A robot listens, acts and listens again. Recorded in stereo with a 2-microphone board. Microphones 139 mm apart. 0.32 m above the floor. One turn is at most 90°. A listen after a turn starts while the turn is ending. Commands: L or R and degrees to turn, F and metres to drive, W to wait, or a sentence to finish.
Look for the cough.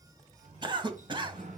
R35
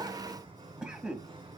Found it: a cough, straight ahead.